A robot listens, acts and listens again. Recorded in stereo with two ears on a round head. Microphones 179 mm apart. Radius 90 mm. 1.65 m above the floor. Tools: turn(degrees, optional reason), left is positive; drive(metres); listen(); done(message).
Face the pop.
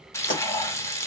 turn(degrees=40, reason="The pop: about 40° left or 140° left.")
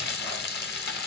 listen()
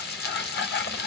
done("I heard a pop, but can't make it out now. It was about straight ahead or 100° left.")